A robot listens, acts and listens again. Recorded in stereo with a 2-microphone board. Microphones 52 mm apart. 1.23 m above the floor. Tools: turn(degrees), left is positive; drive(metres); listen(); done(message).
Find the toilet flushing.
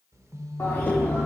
turn(degrees=60)
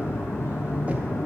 turn(degrees=65)
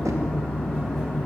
done("Found it: a toilet flushing, straight ahead.")